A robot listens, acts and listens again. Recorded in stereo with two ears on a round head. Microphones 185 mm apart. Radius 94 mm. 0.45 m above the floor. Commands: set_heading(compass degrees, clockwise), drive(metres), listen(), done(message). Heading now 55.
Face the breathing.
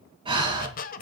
set_heading(80)
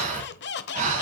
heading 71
set_heading(211)
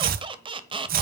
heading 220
set_heading(210)
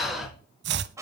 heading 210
done("Found it: breathing, straight ahead.")